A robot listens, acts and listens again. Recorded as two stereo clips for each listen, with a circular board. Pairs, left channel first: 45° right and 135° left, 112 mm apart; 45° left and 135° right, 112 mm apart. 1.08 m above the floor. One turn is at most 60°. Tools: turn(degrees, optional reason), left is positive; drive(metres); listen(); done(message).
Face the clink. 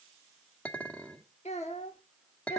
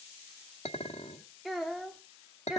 turn(degrees=35, reason="The clink: 35° left.")
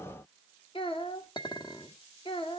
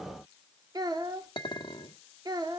done("Facing the clink, 1 to 2 m away.")